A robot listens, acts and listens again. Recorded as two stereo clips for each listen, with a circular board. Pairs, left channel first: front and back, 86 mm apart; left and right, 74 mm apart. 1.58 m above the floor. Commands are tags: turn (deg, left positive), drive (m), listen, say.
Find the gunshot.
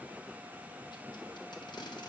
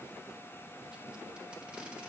<listen/>
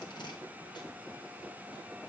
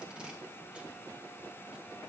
<listen/>
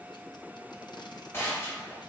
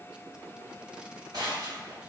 <turn deg="-60"/>
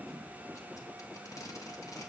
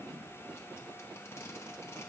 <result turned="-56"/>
<say>Facing where the gunshot came from. I can't hear it now.</say>